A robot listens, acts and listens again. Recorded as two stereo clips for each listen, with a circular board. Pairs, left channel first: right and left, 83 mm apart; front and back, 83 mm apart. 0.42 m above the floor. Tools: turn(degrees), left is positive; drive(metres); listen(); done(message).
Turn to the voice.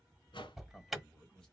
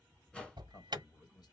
turn(degrees=-10)
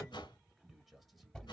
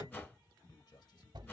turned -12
done("Found it: a man speaking, straight ahead, 1 to 2 m away.")